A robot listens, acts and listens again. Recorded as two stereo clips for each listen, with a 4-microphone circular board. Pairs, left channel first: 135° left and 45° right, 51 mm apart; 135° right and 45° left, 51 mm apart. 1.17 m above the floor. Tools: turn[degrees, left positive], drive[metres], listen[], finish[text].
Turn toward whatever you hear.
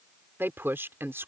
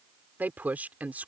Thought: The woman speaking: 10° right.
Action: turn[-10]
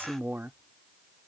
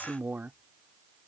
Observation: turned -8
Action: finish[Found it: a woman speaking, straight ahead.]